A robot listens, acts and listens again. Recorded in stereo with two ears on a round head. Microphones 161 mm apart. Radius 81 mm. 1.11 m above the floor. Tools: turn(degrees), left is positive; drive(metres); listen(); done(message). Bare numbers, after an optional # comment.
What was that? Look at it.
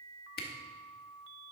# The camera shutter: about 55° left or 125° left.
turn(55)
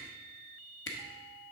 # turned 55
# So it is at 70° left.
turn(70)
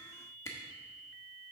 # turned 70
# The camera shutter is now 15° left.
turn(15)
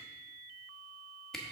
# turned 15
done("Found it: a camera shutter, straight ahead.")